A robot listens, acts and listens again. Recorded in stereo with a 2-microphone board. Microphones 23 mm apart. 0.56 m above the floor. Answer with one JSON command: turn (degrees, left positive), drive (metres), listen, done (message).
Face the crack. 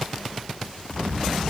{"turn": 75}
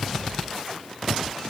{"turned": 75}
{"listen": true}
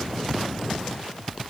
{"done": "I heard a crack, but can't make it out now. It was about straight ahead or 30° left."}